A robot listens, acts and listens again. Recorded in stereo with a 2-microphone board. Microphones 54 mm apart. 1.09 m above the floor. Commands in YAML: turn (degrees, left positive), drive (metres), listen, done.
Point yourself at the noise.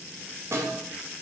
turn: -65
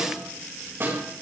turn: -50
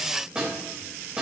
turn: -15
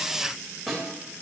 done: "Found it: a snare drum, straight ahead."